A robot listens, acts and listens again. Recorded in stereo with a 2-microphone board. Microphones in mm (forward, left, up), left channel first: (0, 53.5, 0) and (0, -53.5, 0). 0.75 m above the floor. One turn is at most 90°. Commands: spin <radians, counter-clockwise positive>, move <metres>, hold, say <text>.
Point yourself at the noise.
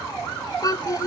spin 0.61
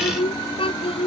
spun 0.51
spin 1.57
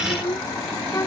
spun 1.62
spin 0.52
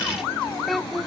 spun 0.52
say Facing the child speaking.